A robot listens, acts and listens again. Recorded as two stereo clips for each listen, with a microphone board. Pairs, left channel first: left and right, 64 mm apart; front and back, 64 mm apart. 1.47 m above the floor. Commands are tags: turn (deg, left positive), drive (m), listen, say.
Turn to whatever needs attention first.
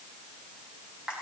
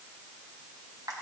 <listen/>
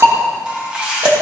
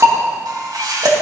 <listen/>
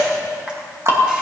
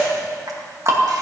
<say>I can't make out anything urgent to turn to.</say>